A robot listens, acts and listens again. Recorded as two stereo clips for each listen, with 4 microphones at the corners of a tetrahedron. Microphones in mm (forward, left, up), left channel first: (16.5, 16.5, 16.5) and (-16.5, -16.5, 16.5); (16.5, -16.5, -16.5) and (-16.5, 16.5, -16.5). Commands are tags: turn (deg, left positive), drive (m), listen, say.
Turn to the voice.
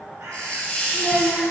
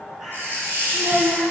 <turn deg="170"/>
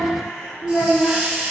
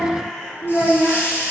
<say>Found it: a child speaking, straight ahead, 2 to 4 m away.</say>